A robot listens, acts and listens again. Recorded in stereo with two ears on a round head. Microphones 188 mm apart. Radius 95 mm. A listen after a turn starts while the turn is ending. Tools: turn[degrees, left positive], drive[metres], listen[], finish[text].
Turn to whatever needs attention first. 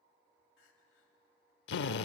Thought: The crying: about 60° left or 120° left.
Action: turn[60]
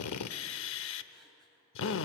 Action: listen[]
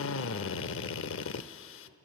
Action: listen[]
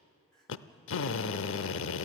Action: finish[Facing the crying, 2 to 4 m away.]